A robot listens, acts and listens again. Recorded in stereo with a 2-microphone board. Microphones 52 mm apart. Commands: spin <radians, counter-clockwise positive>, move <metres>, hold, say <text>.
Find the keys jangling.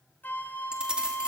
spin -0.26
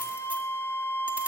hold
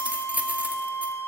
spin -2.62
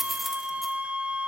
say Facing the keys jangling, 1 to 2 m away.